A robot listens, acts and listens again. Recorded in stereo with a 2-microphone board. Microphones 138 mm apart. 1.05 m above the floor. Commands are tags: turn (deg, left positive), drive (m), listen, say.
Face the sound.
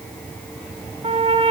<turn deg="-50"/>
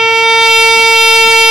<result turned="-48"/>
<say>Facing the trumpet.</say>